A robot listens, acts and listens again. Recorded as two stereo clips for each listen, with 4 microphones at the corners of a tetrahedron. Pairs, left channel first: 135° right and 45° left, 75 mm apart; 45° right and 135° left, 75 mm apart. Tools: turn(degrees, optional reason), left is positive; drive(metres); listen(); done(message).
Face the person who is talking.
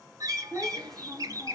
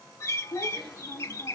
turn(degrees=-50, reason="The child speaking: 50° right.")
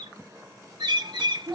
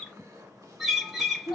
done("Facing the child speaking.")